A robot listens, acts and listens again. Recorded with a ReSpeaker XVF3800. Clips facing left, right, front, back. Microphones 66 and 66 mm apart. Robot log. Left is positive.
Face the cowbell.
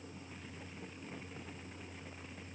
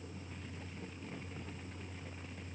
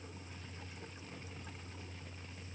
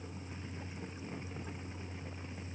cmd idle
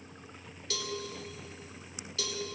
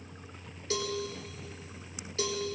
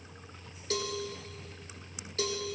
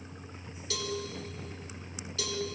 note: The cowbell: 40° right.
cmd yaw -40
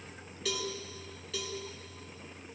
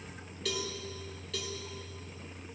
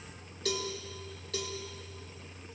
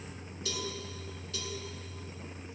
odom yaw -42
end: Facing the cowbell, 1 to 2 m away.